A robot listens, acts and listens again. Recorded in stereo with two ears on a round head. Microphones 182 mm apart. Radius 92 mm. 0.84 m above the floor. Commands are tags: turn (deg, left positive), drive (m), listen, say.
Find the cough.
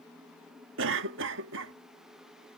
<turn deg="-60"/>
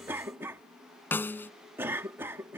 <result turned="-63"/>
<turn deg="-10"/>
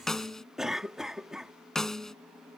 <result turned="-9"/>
<say>Facing the cough.</say>